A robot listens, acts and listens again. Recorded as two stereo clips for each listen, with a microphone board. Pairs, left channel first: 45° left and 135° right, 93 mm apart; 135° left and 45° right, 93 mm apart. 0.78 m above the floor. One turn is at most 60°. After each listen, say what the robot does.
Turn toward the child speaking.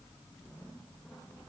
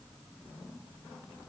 Keep listening.
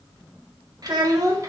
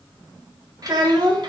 Turn 60° right.
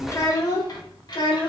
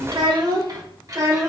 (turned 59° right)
Turn 10° left.
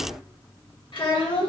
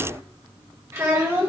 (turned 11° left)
Turn 20° left.
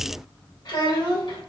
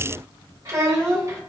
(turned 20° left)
Facing the child speaking, 2 to 4 m away.